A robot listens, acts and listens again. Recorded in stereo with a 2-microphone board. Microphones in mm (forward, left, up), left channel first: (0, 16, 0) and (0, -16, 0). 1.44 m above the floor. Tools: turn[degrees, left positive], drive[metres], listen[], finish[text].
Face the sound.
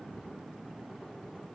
Action: listen[]
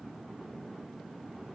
Action: listen[]
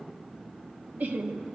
Thought: The laughter: about 65° right or 115° right.
Action: turn[-65]
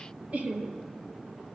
Thought: So it is at 50° right.
Action: turn[-50]
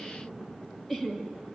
Action: finish[Found it: laughter, straight ahead.]